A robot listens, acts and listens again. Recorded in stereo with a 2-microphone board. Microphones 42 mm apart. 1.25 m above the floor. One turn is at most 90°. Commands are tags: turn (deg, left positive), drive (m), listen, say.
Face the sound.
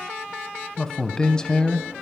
<turn deg="15"/>
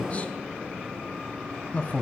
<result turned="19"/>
<turn deg="90"/>
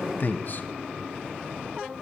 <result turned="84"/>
<turn deg="60"/>
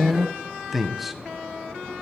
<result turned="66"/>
<say>Found it: a man speaking, straight ahead, under 1 m away.</say>